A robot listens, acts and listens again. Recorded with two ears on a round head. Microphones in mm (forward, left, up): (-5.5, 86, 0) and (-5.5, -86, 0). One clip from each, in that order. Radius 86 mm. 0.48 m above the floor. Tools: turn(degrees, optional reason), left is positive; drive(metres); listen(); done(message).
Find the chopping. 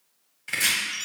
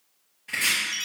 turn(degrees=60, reason="The chopping: about 60° left or 120° left.")
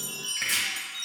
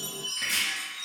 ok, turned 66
turn(degrees=50, reason="So it is at 50° left.")
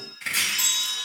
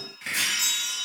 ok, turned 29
turn(degrees=20, reason="The chopping is now 20° left.")
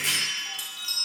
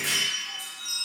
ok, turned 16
turn(degrees=10, reason="The chopping is now 10° left.")
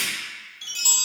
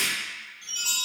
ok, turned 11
done("Facing the chopping, 1 to 2 m away.")